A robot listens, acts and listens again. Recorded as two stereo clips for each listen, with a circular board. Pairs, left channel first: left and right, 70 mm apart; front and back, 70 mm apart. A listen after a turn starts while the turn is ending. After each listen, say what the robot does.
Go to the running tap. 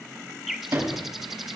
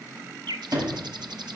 Keep listening.
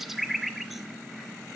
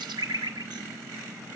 Keep listening.
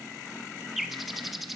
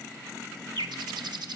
I can't make out a running tap, only a sliding door and a bird.